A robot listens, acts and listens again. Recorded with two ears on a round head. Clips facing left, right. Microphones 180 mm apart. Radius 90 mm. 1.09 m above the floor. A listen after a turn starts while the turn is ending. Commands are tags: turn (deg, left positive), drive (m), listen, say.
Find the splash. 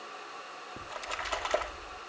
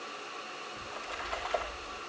<turn deg="65"/>
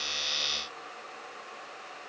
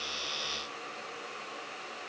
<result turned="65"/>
<listen/>
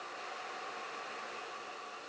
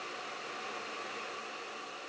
<say>I heard a splash, but can't make it out now. It was about straight ahead or 50° left.</say>